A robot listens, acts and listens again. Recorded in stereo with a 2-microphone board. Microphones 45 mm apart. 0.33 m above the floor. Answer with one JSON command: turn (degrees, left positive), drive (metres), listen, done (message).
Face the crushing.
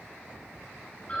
{"listen": true}
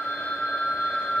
{"listen": true}
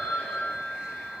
{"done": "I can't make out crushing, only a phone ringing."}